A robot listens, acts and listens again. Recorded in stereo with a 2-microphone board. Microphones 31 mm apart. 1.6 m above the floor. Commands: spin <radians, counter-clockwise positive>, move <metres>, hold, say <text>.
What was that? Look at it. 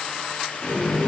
spin -0.61
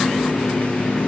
spin -1.92
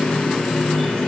say Facing the running tap, 1 to 2 m away.